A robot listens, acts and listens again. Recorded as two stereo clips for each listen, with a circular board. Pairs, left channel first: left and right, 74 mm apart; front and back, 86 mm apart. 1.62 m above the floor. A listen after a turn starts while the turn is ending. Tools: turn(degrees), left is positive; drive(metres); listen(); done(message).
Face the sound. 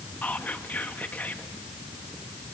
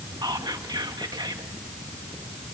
turn(degrees=155)
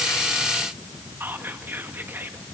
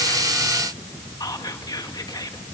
turn(degrees=-35)
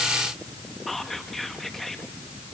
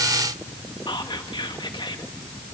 done("Found it: whispering, straight ahead.")